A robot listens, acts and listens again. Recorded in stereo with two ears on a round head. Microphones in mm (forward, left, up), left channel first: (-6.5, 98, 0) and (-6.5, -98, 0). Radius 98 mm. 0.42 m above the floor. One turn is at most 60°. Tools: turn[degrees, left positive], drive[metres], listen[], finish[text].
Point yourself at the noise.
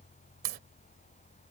Thought: The crack: about 45° right or 135° right.
Action: turn[-45]
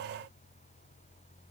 Action: listen[]
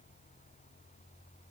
Action: finish[I heard a crack, but can't make it out now. It was about straight ahead or 90° right.]